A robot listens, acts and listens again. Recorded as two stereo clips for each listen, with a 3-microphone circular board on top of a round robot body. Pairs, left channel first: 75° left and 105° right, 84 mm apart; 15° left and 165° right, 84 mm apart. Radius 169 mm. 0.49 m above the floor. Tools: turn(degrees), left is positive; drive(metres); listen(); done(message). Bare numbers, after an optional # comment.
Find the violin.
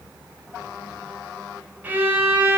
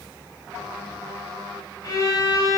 # The violin: 35° right.
turn(-35)
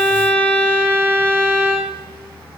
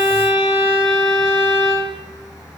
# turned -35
done("Facing the violin, 1 to 2 m away.")